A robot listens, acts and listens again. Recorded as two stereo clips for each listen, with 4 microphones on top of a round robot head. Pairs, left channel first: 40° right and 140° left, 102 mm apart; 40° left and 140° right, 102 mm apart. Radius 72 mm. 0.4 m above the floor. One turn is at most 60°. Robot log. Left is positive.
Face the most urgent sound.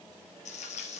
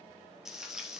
cmd idle
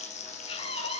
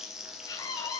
note: The scream: 10° right.
cmd yaw -10
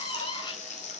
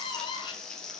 end: Found it: a scream, straight ahead.